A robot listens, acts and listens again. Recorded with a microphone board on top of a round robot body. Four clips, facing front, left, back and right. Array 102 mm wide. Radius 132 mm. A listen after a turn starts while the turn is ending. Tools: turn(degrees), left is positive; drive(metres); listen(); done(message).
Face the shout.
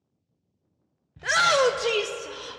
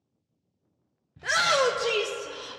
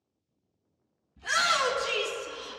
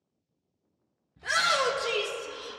turn(degrees=15)
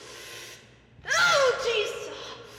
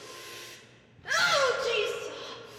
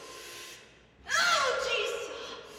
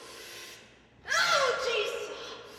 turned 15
done("Facing the shout, 1 to 2 m away.")